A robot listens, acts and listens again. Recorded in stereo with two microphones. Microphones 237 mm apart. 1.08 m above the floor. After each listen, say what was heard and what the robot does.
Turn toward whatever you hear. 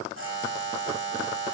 The buzzer: about 60° right or 120° right. Turn 60° right.
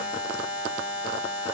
So it is at 55° right. Turn 55° right.
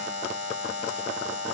The buzzer is now 30° right. Turn 30° right.
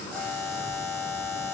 The buzzer is now 15° left. Turn 15° left.
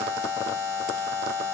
Facing the buzzer, 1 to 2 m away.